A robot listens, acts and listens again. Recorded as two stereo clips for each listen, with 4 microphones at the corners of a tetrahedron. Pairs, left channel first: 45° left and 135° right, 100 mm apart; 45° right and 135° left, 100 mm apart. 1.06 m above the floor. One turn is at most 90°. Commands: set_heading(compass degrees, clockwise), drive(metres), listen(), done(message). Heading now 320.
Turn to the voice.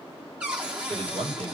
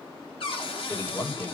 set_heading(50)
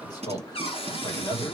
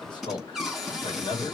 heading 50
done("Facing the man speaking, 2 to 4 m away.")